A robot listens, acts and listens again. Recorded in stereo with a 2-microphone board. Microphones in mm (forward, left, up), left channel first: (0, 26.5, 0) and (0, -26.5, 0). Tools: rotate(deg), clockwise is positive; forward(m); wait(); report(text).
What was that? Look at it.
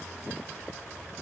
wait()
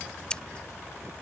rotate(-20)
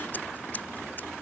wait()
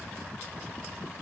wait()
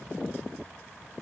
report("I heard scissors, but can't make it out now. It was about straight ahead or 140° left.")